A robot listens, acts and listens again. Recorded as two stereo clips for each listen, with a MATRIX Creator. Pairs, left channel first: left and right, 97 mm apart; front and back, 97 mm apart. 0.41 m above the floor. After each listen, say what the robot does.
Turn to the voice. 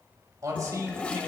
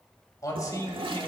Turn 45° right.
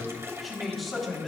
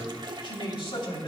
Found it: a man speaking, straight ahead.